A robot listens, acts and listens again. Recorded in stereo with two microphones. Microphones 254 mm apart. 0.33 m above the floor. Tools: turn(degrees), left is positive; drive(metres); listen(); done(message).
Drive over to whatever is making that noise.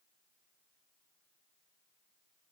listen()
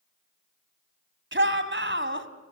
turn(degrees=-50)
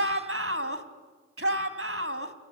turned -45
turn(degrees=-75)
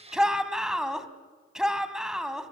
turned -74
drive(metres=1.0)
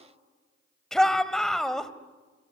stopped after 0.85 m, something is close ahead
done("Arrived at the shout, straight ahead.")